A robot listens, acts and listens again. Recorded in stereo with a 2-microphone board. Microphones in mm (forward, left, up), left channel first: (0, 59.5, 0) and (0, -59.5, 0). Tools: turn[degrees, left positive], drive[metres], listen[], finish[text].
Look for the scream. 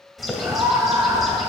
Thought: The scream: about 25° right or 155° right.
Action: turn[-25]
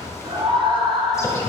Thought: So it is at 130° right.
Action: turn[-130]
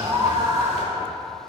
Thought: The scream is now 40° right.
Action: turn[-40]
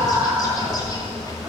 Thought: The scream is now 10° right.
Action: turn[-10]
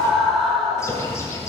Action: finish[Found it: a scream, straight ahead, 2 to 4 m away.]